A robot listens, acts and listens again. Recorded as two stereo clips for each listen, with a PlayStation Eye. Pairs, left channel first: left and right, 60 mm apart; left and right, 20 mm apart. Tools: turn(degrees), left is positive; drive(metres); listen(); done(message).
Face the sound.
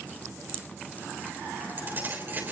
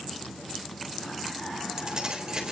turn(degrees=-35)
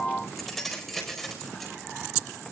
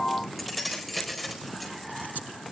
done("Facing the keys jangling.")